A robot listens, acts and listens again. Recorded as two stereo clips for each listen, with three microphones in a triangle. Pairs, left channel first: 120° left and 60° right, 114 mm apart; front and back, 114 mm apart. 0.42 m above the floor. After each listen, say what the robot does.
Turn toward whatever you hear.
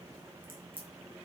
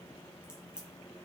Turn 100° right.
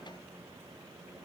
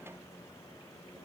Facing where the crack came from. I can't hear it now.